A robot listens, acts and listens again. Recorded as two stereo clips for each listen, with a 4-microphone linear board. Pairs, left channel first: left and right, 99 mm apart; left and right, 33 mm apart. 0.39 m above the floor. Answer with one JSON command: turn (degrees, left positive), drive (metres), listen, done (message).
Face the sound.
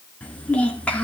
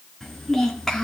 {"turn": 30}
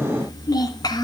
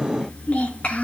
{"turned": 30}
{"turn": 135}
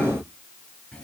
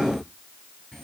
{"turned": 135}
{"turn": 10}
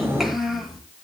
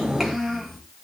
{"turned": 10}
{"done": "Facing the child speaking."}